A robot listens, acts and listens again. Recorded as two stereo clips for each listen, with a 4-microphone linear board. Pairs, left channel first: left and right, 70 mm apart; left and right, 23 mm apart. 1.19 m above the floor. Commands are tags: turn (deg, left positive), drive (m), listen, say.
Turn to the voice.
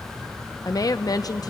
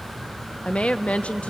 <turn deg="60"/>
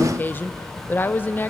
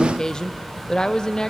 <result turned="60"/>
<turn deg="30"/>
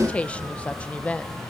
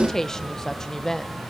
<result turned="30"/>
<turn deg="20"/>
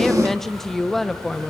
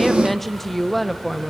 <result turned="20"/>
<say>Facing the woman speaking, under 1 m away.</say>